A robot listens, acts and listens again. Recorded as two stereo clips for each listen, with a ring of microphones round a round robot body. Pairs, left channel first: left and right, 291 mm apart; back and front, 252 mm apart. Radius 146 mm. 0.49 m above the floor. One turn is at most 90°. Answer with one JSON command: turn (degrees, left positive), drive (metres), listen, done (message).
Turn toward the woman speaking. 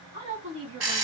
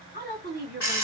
{"turn": -55}
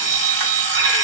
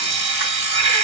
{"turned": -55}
{"listen": true}
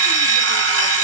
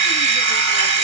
{"listen": true}
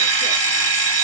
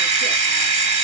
{"done": "I heard a woman speaking from this way, but can't make it out now."}